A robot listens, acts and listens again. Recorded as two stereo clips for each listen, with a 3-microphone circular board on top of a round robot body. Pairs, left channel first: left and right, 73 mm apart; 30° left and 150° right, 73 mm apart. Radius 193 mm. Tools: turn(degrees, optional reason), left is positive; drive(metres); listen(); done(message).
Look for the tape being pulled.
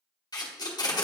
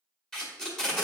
turn(degrees=115, reason="The tape being pulled: 115° left.")
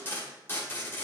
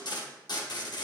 turn(degrees=30, reason="The tape being pulled is now 30° left.")
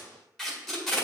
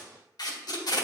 done("Found it: tape being pulled, straight ahead.")